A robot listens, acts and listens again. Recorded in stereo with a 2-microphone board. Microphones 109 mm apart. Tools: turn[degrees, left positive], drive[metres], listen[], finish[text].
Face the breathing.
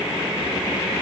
Action: listen[]
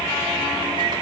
Action: listen[]
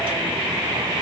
Action: finish[I can't make out breathing to turn to.]